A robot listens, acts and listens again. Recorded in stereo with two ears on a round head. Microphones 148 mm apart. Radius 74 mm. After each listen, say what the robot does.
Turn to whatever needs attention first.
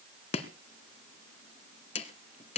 Keep listening.
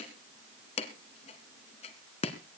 Keep listening.
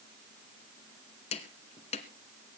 I can't make out anything urgent, only chopping.